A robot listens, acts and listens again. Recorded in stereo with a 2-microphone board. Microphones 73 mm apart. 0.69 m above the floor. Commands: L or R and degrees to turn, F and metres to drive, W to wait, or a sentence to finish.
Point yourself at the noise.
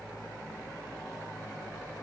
W
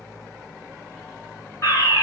L40
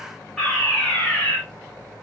Facing the fire alarm.